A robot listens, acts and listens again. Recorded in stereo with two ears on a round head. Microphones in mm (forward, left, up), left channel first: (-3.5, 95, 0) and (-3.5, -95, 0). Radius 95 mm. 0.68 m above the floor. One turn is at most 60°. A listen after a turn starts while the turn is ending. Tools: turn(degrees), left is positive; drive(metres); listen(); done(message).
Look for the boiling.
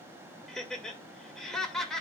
listen()
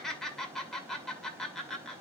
listen()
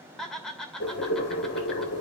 turn(degrees=55)
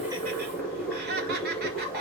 done("Found it: boiling, straight ahead.")